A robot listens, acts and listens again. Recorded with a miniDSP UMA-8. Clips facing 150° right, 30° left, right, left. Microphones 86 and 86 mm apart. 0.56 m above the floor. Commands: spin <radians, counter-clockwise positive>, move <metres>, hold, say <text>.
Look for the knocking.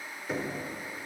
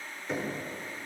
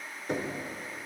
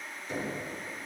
spin -1.22
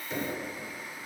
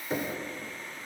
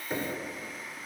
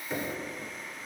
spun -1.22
spin -0.26
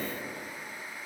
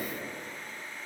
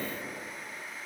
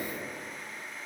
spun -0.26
hold
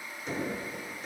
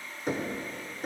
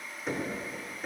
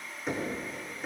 say Facing the knocking, under 1 m away.